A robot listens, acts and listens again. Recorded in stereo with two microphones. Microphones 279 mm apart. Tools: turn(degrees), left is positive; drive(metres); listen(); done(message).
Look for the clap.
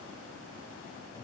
listen()
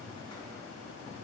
listen()
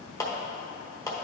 turn(degrees=30)
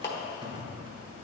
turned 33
turn(degrees=135)
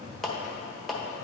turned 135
done("Found it: a clap, straight ahead, 1 to 2 m away.")